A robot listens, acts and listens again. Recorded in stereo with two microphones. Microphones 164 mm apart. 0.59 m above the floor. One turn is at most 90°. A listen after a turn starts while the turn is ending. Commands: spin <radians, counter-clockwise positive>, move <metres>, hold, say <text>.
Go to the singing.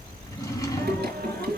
spin -1.57
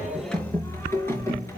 spin 0.26
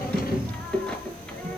move 1.0
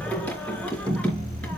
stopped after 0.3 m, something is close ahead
say Something is in my way. I am facing the singing but have not reached it.